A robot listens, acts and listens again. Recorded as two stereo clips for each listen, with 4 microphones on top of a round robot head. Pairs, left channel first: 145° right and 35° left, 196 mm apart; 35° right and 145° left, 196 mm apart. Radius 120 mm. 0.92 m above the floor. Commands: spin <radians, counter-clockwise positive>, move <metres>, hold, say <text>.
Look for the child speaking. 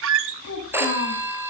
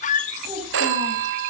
spin -2.71
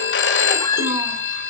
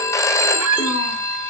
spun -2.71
hold
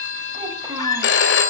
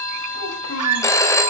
hold
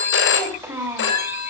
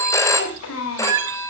spin -0.70
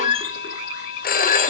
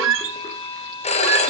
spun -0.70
hold
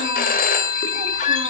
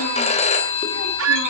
hold
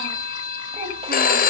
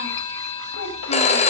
spin -0.52
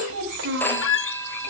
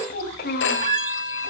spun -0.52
say Found it: a child speaking, straight ahead, over 4 m away.